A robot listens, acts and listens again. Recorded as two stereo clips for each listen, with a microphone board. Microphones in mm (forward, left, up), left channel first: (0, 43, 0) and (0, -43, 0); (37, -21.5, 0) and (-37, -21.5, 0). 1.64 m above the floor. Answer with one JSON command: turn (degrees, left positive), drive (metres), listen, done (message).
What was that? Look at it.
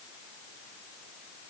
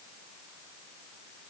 {"listen": true}
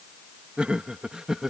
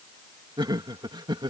{"turn": -175}
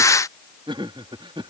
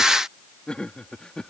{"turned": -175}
{"turn": -80}
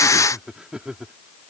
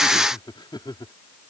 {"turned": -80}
{"turn": -10}
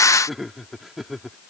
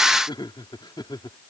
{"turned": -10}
{"done": "Facing the laughter."}